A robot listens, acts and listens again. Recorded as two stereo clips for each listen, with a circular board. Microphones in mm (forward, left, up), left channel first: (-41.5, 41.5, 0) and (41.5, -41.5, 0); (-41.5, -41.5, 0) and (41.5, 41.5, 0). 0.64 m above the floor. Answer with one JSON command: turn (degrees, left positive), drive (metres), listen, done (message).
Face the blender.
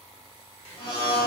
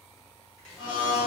{"turn": 180}
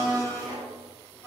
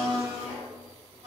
{"turn": 70}
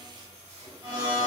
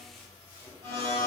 {"turn": 10}
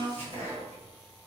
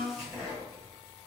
{"done": "Facing the blender, 1 to 2 m away."}